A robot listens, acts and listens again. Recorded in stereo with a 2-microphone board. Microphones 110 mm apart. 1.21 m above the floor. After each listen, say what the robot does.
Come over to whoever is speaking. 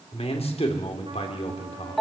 Turn 65° left.
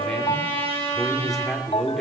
Drive 1.0 m forward.
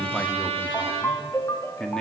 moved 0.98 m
Drive 1.0 m forward.
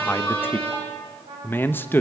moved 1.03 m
Turn 20° left.
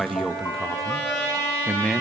Drive 1.0 m forward.
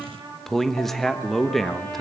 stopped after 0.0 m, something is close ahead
Arrived at the man speaking, straight ahead.